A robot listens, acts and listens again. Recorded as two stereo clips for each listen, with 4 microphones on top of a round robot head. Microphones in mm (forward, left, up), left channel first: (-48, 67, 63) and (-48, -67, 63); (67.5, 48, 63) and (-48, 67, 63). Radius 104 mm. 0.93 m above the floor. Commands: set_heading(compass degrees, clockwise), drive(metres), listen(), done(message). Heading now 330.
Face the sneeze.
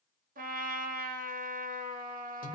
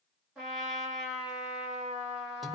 listen()
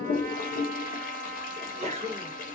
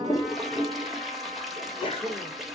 set_heading(25)
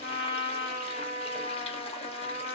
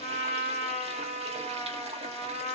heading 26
done("I heard a sneeze from this way, but can't make it out now.")